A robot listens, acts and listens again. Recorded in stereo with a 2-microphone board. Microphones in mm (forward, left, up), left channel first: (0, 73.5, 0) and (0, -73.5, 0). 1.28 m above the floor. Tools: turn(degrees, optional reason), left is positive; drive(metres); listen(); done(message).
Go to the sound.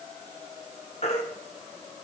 turn(degrees=50, reason="The baby crying: about 50° left or 130° left.")
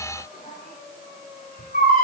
turn(degrees=80, reason="So it is at 80° left.")
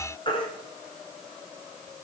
turn(degrees=35, reason="The baby crying is now 35° left.")
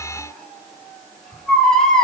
drive(metres=1.0)
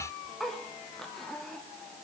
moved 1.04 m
listen()
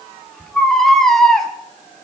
drive(metres=1.0)
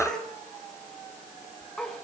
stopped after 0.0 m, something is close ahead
done("Arrived at the baby crying, straight ahead.")